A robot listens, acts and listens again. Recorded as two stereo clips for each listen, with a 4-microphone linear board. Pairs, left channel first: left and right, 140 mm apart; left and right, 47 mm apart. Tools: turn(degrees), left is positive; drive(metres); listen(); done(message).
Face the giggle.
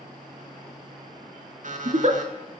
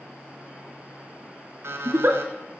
turn(degrees=-50)
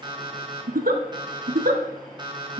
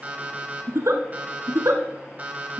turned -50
turn(degrees=-80)
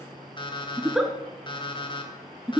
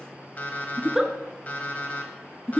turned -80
done("Facing the giggle.")